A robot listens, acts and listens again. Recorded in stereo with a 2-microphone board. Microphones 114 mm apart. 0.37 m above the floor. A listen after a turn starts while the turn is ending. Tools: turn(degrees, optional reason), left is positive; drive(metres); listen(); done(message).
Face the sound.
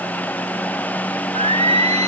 turn(degrees=-75, reason="The singing: about 75° right or 105° right.")
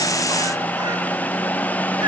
listen()
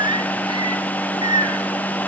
turn(degrees=-45, reason="So it is at 45° right.")
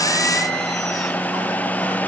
listen()
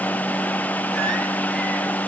listen()
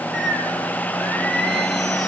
done("Facing the singing, 2 to 4 m away.")